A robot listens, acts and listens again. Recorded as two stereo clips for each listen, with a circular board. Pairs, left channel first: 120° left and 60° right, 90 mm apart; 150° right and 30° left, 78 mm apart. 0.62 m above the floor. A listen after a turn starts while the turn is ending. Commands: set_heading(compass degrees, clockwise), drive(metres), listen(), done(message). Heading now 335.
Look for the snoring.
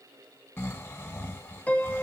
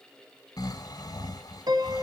set_heading(155)
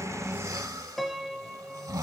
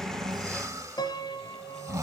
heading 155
set_heading(170)
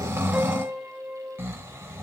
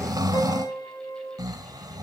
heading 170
done("Facing the snoring, 1 to 2 m away.")